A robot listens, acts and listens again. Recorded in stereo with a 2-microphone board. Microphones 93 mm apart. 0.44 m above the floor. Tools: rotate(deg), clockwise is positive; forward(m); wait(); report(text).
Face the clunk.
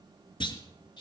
rotate(-60)
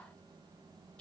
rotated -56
wait()
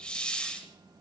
report("I heard a clunk, but can't make it out now. It was about 5° left or 65° left.")